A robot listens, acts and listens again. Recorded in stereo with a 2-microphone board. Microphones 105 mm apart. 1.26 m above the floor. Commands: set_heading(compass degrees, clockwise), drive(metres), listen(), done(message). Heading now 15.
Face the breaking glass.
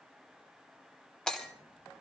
set_heading(345)
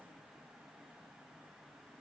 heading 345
listen()
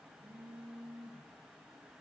done("I heard breaking glass, but can't make it out now. It was about 25° right or 145° left.")